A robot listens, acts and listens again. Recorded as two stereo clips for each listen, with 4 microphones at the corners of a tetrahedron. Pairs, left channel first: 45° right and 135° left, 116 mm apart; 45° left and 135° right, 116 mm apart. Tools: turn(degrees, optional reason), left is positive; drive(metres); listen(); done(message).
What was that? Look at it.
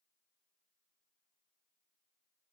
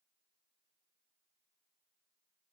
listen()
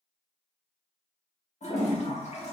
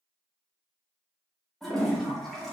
turn(degrees=-40, reason="The toilet flushing: 40° right.")
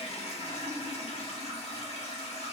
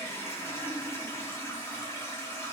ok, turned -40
turn(degrees=-25, reason="The toilet flushing is now 25° right.")
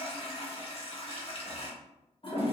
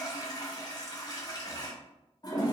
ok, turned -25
turn(degrees=-10, reason="The toilet flushing is now 10° right.")
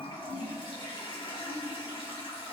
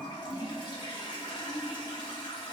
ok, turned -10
done("Facing the toilet flushing.")